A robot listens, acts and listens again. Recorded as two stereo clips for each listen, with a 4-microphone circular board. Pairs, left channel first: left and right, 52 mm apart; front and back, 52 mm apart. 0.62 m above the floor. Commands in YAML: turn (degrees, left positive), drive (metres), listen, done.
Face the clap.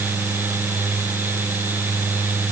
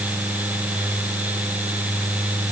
listen: true
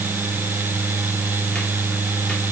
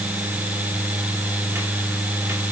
listen: true
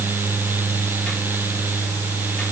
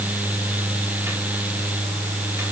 done: "I can't make out a clap."